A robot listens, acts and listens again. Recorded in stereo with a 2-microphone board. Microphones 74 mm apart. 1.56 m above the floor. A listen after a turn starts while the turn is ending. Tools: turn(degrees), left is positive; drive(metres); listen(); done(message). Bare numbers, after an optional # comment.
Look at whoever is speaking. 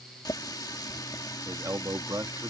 # The man speaking: about 55° right or 125° right.
turn(-55)
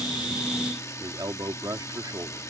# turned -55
# So it is at 60° right.
turn(-60)
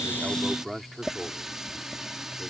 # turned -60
done("Facing the man speaking.")